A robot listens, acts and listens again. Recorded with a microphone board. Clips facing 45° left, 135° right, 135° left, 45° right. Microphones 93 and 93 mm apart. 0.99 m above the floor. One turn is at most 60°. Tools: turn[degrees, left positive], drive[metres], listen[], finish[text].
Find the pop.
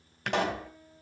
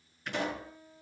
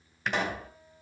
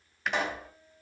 Thought: The pop: 45° left.
Action: turn[45]
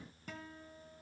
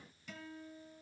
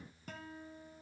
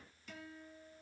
Action: finish[I heard a pop from this way, but can't make it out now.]